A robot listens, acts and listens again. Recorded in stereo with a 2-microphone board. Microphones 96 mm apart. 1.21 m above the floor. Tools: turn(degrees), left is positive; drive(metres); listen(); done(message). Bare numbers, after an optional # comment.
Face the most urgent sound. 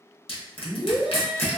turn(30)
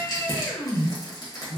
# So it is at 150° left.
turn(150)
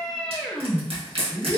done("Facing the scream, under 1 m away.")